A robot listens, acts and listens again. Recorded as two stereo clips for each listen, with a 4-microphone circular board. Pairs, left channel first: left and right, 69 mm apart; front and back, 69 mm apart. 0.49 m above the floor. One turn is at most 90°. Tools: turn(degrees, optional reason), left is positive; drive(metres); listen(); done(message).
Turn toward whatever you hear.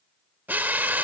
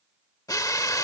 turn(degrees=-30, reason="The drill: 30° right.")
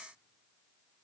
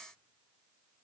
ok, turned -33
listen()
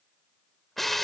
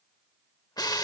done("Found it: a drill, straight ahead, under 1 m away.")